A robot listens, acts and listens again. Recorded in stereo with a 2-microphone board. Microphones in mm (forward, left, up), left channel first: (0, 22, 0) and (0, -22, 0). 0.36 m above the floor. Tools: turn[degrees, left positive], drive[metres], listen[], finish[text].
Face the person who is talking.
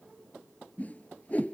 Action: listen[]
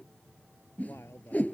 Action: turn[90]
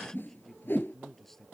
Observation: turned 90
Action: finish[Facing the man speaking.]